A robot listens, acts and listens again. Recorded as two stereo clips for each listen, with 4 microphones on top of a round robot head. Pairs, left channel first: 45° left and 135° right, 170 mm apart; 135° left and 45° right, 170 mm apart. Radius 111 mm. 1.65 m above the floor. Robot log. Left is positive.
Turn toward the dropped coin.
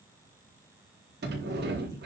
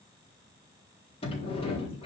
cmd idle
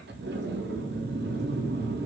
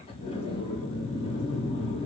cmd idle
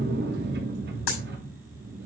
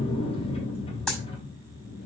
note: The dropped coin: 50° left.
cmd yaw +50
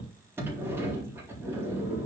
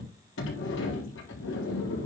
end: I heard a dropped coin from this way, but can't make it out now.